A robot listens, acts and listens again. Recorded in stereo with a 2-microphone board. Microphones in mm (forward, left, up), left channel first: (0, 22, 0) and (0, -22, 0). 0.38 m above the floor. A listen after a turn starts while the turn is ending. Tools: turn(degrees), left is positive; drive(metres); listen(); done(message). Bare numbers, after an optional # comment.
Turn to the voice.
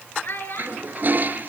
# The child speaking: about 55° left or 125° left.
turn(55)
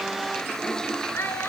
# So it is at 70° left.
turn(70)
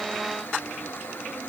listen()
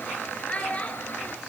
# The child speaking is now 30° left.
turn(30)
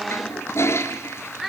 done("Found it: a child speaking, straight ahead, 2 to 4 m away.")